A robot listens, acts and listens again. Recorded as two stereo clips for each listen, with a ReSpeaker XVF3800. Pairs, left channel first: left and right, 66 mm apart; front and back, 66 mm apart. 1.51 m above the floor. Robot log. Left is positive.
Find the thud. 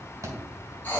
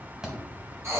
note: The thud: 100° right.
cmd yaw -100
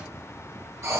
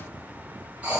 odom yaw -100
end: I heard a thud from this way, but can't make it out now.